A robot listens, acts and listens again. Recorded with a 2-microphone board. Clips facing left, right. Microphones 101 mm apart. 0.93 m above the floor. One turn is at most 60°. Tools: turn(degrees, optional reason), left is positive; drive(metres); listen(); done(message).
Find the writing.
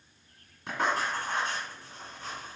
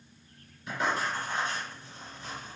turn(degrees=60)
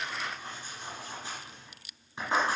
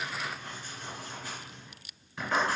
turn(degrees=25, reason="So it is at 25° left.")
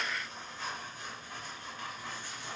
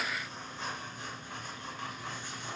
turn(degrees=-20, reason="The writing is now 20° right.")
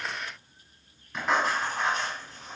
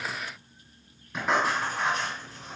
done("Found it: writing, straight ahead, 1 to 2 m away.")